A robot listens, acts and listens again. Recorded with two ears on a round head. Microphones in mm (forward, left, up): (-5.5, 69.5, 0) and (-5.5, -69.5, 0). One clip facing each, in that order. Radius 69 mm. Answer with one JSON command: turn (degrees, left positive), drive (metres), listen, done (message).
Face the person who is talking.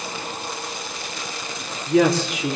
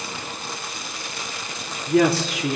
{"turn": -30}
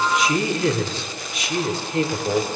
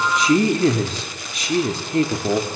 {"turn": -145}
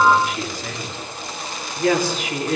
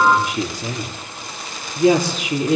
{"turn": -15}
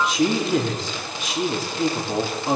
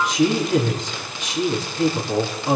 {"done": "Facing the woman speaking."}